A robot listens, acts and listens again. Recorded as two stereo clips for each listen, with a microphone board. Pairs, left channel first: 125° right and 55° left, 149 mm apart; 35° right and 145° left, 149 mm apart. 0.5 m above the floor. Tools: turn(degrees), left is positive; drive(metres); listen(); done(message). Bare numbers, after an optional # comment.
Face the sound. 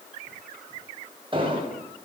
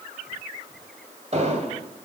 # The explosion: 105° left.
turn(105)
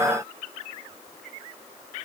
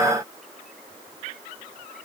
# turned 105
done("Facing where the explosion came from. I can't hear it now.")